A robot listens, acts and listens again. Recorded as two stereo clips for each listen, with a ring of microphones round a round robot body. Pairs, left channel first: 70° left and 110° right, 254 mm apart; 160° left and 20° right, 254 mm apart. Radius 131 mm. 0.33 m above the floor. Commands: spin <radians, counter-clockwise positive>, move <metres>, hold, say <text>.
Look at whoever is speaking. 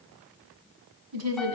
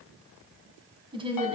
spin -1.57
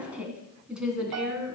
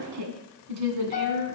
spin -0.44
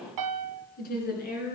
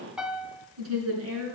spin 0.26
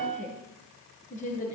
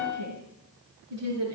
say Found it: a woman speaking, straight ahead.